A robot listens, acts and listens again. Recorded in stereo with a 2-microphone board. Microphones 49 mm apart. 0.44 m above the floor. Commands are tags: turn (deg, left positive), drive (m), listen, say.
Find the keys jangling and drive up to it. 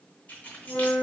<turn deg="35"/>
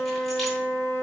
<listen/>
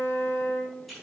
<drive m="1.0"/>
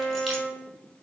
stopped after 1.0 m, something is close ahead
<listen/>
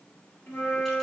<listen/>
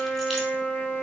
<say>Facing where the keys jangling came from. I can't hear it now. I did not reach it.</say>